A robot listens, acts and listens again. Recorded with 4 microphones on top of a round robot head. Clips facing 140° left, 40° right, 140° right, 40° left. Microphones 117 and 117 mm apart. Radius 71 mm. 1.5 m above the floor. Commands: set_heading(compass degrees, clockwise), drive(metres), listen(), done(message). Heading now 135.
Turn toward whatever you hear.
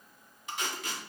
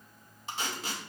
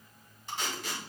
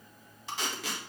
set_heading(115)
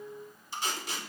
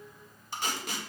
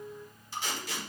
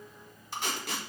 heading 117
done("Found it: tape being pulled, straight ahead, 1 to 2 m away.")